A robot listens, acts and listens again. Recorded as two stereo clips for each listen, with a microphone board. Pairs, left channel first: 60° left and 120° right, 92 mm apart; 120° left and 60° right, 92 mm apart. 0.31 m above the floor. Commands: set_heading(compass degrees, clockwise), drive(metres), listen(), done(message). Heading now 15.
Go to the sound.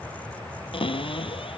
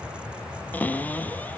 set_heading(330)
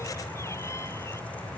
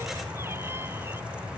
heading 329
listen()
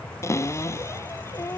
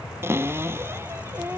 drive(1.0)
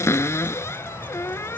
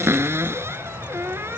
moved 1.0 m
drive(1.0)
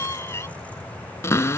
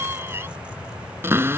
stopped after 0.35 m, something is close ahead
done("I am next to the cupboard door.")